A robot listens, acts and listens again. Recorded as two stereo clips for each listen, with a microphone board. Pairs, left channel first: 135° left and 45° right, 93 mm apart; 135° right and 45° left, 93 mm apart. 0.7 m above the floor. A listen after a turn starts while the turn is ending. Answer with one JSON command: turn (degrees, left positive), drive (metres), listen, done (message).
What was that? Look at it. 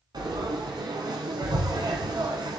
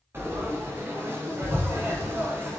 {"turn": -15}
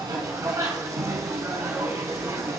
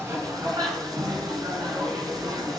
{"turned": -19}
{"done": "Found it: frying, straight ahead."}